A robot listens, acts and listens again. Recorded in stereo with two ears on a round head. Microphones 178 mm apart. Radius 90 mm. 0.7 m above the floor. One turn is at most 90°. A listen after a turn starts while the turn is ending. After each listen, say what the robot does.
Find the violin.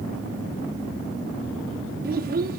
Keep listening.
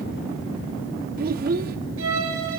Turn 90° right.
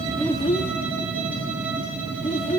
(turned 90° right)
Keep listening.
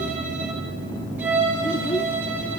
Turn 10° right.
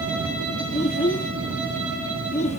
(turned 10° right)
Keep listening.
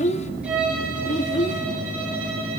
Found it: a violin, straight ahead.